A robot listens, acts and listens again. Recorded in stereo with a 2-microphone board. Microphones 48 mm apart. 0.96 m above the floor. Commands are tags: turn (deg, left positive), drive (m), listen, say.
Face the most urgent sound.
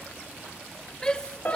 <turn deg="20"/>
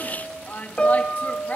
<turn deg="135"/>
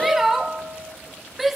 <say>Found it: a shout, straight ahead, 1 to 2 m away.</say>